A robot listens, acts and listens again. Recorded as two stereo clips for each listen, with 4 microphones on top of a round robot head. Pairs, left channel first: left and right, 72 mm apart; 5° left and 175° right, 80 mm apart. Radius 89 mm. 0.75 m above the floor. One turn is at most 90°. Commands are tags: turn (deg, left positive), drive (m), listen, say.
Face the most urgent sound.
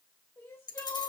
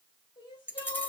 <turn deg="30"/>
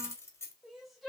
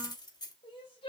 <say>Found it: crying, straight ahead.</say>